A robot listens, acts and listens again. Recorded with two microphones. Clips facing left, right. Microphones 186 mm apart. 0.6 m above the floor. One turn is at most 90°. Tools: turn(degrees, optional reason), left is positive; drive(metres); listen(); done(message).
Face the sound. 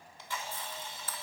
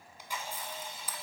turn(degrees=-30)
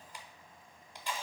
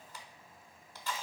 turn(degrees=15, reason="So it is at 15° left.")
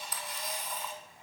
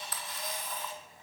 done("Facing the camera shutter.")